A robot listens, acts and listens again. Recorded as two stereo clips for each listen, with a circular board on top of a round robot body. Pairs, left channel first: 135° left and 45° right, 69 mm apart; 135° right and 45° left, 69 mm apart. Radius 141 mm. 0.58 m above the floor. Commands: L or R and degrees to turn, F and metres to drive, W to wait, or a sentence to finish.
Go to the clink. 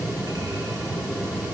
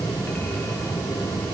W
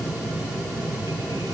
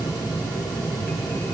W
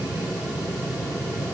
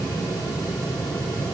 I can't make out a clink to turn to.